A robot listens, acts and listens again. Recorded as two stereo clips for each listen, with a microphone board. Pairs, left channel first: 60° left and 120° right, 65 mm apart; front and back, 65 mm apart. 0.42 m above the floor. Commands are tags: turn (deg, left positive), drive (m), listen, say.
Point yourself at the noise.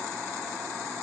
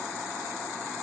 <listen/>
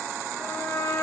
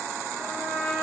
<turn deg="30"/>
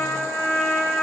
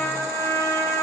<turn deg="-10"/>
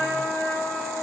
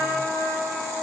<say>Facing the trumpet.</say>